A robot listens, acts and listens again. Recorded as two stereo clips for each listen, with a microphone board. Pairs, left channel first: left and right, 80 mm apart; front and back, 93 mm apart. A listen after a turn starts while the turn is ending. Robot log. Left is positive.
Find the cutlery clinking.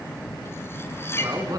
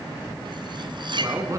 note: The cutlery clinking: 150° left.
cmd yaw +150
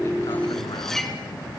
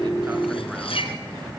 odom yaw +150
end: Found it: cutlery clinking, straight ahead.